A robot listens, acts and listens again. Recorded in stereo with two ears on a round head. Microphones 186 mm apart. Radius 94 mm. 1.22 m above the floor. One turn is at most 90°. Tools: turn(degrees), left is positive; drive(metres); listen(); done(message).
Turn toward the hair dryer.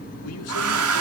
turn(degrees=-90)
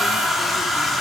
done("Found it: a hair dryer, straight ahead.")